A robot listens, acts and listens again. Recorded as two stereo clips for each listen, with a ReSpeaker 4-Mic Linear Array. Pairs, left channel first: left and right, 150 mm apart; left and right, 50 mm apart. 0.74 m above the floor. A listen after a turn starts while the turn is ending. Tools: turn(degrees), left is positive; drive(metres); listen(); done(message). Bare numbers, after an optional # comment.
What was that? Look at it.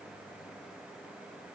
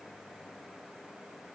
listen()
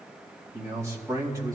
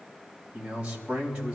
# The man speaking: about 25° right or 155° right.
turn(-25)
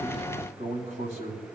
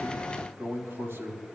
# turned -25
# So it is at 130° right.
turn(-130)
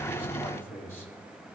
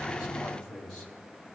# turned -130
# The man speaking is now 15° left.
turn(15)
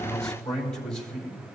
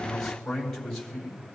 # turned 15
done("Found it: a man speaking, straight ahead.")